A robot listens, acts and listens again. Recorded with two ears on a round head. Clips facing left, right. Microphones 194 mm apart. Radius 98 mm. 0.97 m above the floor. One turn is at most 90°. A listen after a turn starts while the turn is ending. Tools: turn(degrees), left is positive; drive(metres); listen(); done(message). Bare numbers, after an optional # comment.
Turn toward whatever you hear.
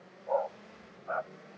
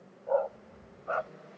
# The dog barking: about 45° right or 135° right.
turn(-45)
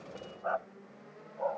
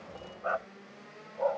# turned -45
# So it is at 50° right.
turn(-50)
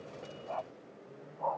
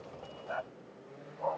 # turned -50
# The dog barking is now 25° right.
turn(-25)
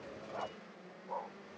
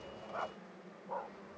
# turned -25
done("Facing the dog barking.")